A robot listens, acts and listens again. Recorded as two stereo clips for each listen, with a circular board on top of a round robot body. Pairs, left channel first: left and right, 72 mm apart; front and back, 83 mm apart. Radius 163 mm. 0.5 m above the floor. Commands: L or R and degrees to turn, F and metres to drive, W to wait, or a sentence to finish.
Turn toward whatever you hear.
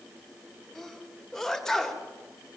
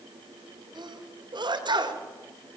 L175
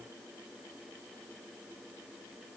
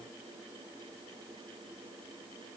I heard a sneeze from this way, but can't make it out now.